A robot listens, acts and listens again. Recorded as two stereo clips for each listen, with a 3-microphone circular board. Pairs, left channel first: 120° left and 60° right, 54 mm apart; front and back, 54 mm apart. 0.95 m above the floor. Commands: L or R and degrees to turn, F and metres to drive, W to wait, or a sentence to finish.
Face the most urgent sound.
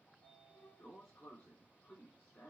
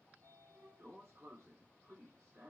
W
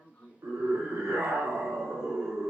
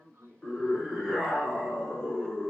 R85
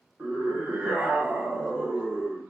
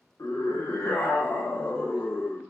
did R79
Found it: a scream, straight ahead, under 1 m away.